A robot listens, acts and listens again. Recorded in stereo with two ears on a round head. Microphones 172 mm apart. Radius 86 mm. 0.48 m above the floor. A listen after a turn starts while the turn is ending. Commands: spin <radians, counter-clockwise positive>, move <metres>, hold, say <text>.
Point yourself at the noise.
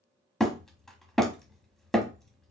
spin 0.52
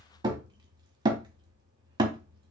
spin -0.44
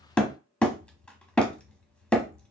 say Found it: hammering, straight ahead, under 1 m away.